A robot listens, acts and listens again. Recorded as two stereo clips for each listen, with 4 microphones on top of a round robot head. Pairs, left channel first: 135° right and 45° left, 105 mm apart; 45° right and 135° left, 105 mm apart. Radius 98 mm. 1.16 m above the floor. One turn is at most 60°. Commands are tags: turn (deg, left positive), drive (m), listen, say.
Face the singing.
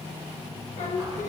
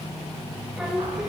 <turn deg="-60"/>
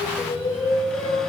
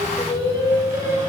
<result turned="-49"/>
<turn deg="-60"/>
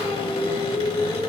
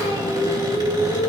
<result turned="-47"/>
<turn deg="-30"/>
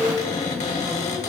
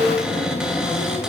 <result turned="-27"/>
<say>Found it: singing, straight ahead.</say>